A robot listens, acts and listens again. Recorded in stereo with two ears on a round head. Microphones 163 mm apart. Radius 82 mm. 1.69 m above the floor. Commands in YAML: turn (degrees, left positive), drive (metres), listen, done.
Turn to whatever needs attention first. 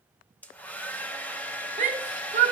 turn: -40
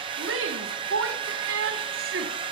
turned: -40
turn: -95
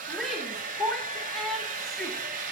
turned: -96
done: "Facing the shout."